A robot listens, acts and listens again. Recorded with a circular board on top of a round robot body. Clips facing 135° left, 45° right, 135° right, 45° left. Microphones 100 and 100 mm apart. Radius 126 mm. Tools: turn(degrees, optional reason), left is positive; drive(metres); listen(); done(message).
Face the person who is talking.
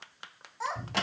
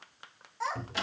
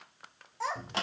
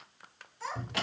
turn(degrees=-140, reason="The child speaking: 140° right.")
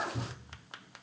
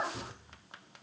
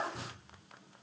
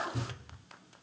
turn(degrees=-50, reason="The child speaking is now 50° right.")
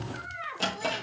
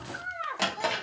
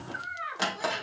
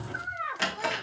done("Facing the child speaking.")